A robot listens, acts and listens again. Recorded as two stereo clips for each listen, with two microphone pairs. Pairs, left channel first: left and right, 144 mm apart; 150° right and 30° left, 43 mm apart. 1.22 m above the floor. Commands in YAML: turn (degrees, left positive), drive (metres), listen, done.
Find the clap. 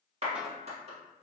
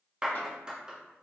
turn: -45
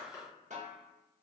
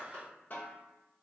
turn: 20
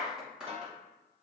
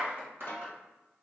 done: "Facing the clap."